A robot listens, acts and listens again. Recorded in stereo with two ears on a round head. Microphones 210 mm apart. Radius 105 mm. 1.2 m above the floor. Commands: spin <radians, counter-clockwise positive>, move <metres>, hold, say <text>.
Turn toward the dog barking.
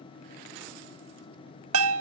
hold
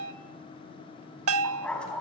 spin 0.52
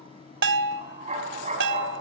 spin -0.52
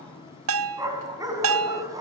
spin -0.26
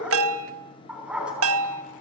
say Found it: a dog barking, straight ahead, over 4 m away.